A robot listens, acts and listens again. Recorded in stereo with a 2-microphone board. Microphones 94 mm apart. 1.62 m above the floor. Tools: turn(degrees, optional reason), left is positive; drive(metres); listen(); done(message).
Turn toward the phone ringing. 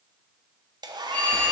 turn(degrees=15, reason="The phone ringing: about 15° left or 165° left.")
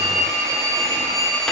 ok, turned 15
done("Found it: a phone ringing, straight ahead, 2 to 4 m away.")